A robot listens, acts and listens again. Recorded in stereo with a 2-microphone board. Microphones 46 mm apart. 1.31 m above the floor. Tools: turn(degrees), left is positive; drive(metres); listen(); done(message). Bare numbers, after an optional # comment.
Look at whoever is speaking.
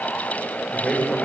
turn(30)
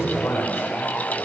# So it is at 140° left.
turn(140)
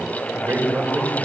# The man speaking is now 40° right.
turn(-40)
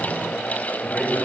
# The man speaking is now 10° left.
turn(10)
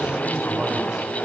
done("Found it: a man speaking, straight ahead.")